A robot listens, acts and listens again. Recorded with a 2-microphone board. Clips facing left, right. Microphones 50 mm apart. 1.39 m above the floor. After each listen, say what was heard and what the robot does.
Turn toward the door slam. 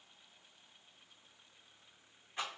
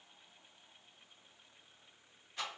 Keep listening.
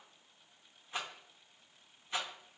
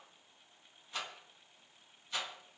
Keep listening.
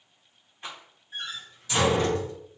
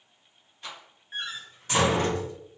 The door slam: about 45° right or 135° right. Turn 45° right.
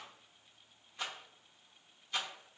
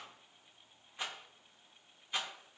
Keep listening.
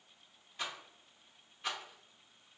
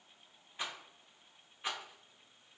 I heard a door slam, but can't make it out now. It was about straight ahead or 90° right.